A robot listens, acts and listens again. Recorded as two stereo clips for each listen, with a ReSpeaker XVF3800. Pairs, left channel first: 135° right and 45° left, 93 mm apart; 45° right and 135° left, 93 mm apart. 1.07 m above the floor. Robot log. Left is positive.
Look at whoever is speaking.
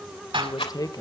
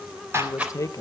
note: The man speaking: 95° right.
cmd yaw -95
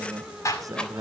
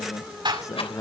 end: Facing the man speaking, 1 to 2 m away.